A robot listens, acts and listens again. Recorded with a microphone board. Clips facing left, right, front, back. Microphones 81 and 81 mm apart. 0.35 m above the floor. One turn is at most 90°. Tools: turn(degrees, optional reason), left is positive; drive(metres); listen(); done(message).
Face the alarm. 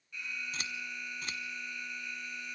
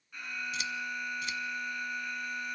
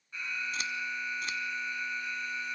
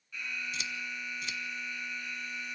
turn(degrees=-50, reason="The alarm: 50° right.")
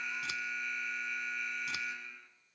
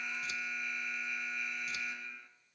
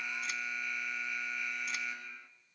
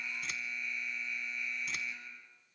done("Found it: an alarm, straight ahead, 2 to 4 m away.")